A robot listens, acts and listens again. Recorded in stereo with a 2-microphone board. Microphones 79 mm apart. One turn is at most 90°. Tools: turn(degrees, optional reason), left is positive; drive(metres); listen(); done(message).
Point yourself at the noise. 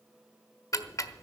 turn(degrees=40, reason="The ticking: about 40° left or 140° left.")
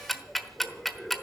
done("Found it: ticking, straight ahead.")